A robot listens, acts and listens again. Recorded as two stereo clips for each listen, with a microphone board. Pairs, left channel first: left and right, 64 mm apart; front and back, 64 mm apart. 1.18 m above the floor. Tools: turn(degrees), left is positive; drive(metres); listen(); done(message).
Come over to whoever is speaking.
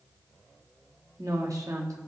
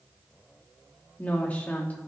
turn(degrees=-65)
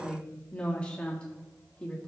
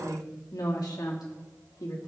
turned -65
turn(degrees=15)
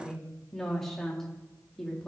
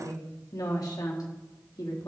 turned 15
drive(metres=1.0)
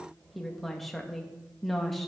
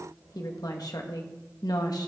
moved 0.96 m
drive(metres=1.0)
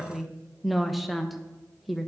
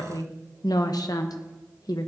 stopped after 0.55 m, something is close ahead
done("Arrived at the woman speaking, straight ahead.")